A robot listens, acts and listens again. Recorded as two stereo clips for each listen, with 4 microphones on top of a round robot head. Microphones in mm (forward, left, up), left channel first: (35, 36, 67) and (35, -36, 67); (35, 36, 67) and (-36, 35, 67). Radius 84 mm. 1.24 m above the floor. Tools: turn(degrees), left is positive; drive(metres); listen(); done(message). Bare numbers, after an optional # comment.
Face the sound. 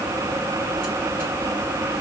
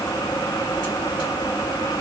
listen()
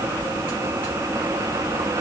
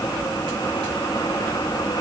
listen()
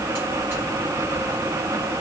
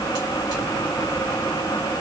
done("I can't make out anything.")